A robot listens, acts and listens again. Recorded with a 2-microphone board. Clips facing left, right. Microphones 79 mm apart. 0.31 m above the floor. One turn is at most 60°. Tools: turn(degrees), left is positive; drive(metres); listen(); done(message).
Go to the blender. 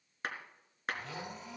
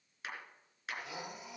turn(degrees=-30)
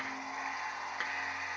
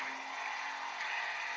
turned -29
turn(degrees=20)
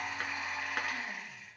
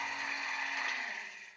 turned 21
drive(metres=1.0)
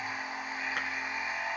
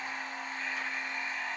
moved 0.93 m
turn(degrees=10)
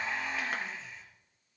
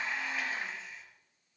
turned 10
drive(metres=1.0)
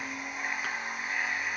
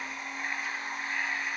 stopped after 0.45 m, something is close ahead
done("Something is in my way. I am facing the blender but have not reached it.")